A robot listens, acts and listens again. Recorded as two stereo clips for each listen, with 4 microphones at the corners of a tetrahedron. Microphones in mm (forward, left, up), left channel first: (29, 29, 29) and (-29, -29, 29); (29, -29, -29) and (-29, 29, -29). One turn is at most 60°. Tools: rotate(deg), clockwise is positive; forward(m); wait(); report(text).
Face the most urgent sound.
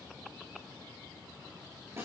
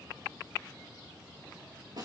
wait()
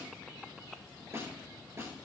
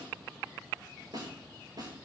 wait()
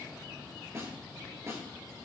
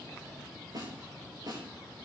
report("I can't make out anything urgent to turn to.")